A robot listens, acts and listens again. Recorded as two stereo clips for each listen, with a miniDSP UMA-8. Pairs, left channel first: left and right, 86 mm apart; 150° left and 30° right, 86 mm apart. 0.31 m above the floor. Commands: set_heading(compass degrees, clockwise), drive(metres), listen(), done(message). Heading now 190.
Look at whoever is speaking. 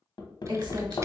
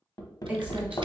set_heading(295)
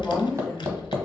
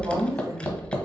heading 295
done("Found it: a woman speaking, straight ahead.")